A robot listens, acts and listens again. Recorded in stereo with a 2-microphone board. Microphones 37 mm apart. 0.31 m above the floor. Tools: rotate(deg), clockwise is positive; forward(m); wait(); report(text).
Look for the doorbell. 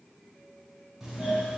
rotate(30)
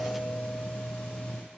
rotate(-25)
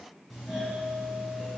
report("Facing the doorbell, 2 to 4 m away.")